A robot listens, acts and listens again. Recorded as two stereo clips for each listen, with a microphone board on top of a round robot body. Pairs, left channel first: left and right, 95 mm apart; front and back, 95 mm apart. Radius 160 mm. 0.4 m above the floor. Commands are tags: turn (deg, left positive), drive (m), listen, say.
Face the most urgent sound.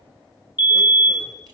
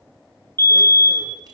<turn deg="60"/>
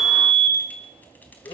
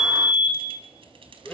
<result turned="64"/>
<say>Found it: a fire alarm, straight ahead, over 4 m away.</say>